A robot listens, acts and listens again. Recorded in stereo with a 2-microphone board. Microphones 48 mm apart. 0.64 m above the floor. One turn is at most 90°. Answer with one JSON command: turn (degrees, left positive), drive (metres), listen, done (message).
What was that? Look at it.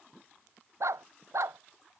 {"turn": -90}
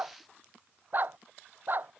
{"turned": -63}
{"turn": -45}
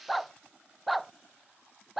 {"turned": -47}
{"done": "Facing the dog barking."}